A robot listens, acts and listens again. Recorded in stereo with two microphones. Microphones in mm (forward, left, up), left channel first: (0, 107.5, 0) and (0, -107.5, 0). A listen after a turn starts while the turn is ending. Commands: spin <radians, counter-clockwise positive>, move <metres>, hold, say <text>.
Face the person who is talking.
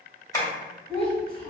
spin 0.44
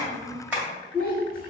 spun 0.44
spin 2.27
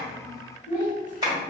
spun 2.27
say Found it: a child speaking, straight ahead, 2 to 4 m away.